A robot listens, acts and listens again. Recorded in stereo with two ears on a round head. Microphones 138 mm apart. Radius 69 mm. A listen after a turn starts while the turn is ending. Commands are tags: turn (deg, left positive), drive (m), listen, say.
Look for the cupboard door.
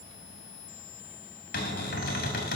<turn deg="70"/>
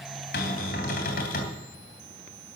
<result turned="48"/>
<turn deg="60"/>
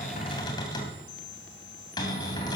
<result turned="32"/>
<turn deg="25"/>
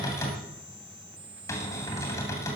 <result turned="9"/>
<turn deg="20"/>
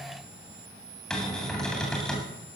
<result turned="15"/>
<say>Found it: a cupboard door, straight ahead, 2 to 4 m away.</say>